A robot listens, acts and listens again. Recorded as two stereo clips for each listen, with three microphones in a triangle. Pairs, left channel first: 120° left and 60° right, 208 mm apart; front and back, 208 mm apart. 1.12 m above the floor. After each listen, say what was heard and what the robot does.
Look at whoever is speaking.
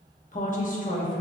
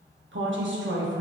The woman speaking: 165° left. Turn 165° left.
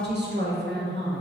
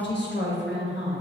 The woman speaking is now 25° right. Turn 25° right.
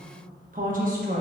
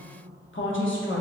The woman speaking is now 15° right. Turn 15° right.
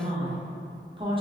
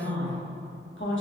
Found it: a woman speaking, straight ahead.